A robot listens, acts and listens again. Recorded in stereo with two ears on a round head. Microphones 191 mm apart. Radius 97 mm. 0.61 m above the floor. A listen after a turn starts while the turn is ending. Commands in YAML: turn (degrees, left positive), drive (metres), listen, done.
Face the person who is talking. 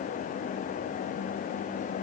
listen: true
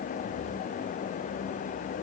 listen: true
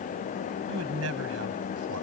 turn: -90
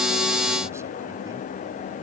listen: true
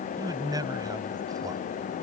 turn: -15
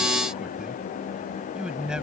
done: "Found it: a man speaking, straight ahead."